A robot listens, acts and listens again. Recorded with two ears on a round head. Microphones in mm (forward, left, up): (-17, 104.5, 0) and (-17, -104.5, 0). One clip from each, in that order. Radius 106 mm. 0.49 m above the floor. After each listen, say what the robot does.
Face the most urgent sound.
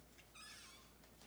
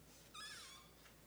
Keep listening.
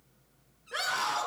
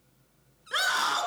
Turn 75° right.
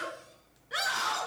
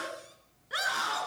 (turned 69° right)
Found it: a scream, straight ahead.